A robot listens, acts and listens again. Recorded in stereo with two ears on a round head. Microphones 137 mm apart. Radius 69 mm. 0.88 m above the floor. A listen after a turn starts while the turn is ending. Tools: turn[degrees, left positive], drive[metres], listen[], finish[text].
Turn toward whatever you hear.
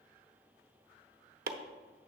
Thought: The chopping: about 65° right or 115° right.
Action: turn[-65]
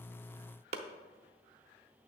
Thought: So it is at 45° right.
Action: turn[-45]
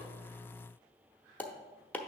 Thought: The chopping is now 10° left.
Action: turn[10]
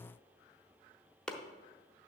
Action: finish[Found it: chopping, straight ahead.]